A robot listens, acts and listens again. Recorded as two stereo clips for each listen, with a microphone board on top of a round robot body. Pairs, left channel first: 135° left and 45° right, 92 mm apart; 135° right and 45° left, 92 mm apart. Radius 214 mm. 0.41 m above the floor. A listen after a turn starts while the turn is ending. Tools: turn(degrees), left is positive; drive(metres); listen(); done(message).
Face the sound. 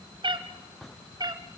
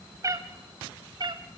done("Facing the cat meowing.")